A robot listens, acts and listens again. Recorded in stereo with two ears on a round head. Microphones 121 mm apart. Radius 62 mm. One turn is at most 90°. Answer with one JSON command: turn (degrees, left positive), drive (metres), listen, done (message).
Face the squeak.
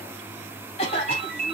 {"listen": true}
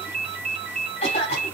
{"listen": true}
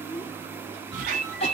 {"turn": -55}
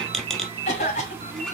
{"done": "Facing the squeak."}